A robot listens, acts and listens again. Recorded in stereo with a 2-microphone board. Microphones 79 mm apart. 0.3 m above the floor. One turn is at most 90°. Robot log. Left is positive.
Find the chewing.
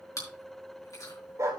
note: The chewing: about 50° left or 130° left.
cmd yaw +50
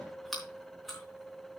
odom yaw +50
end: Facing the chewing.